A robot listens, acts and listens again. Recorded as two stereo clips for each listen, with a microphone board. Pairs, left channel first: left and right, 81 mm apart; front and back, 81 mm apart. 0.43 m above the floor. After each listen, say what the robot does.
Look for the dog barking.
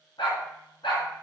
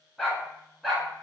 Turn 95° left.
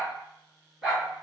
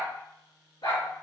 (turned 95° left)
Found it: a dog barking, straight ahead.